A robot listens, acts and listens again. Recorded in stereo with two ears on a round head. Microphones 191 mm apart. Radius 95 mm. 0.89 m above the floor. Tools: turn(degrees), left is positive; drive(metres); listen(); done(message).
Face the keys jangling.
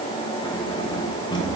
turn(degrees=20)
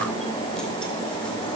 listen()
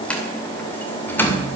turn(degrees=30)
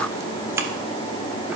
turn(degrees=-15)
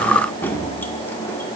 turn(degrees=10)
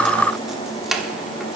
done("Facing the keys jangling, 1 to 2 m away.")